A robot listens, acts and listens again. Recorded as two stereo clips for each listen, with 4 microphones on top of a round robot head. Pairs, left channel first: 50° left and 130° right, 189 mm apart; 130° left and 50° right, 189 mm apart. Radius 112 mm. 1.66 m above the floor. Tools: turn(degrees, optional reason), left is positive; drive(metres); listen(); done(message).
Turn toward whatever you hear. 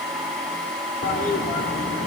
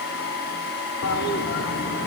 turn(degrees=100, reason="The toilet flushing: 100° left.")
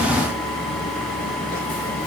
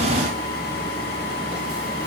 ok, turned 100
listen()
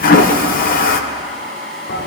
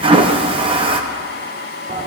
turn(degrees=10, reason="The toilet flushing is now 10° left.")
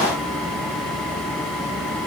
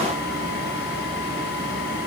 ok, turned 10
listen()
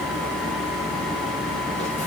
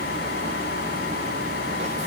listen()
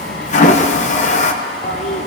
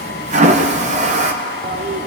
done("Facing the toilet flushing.")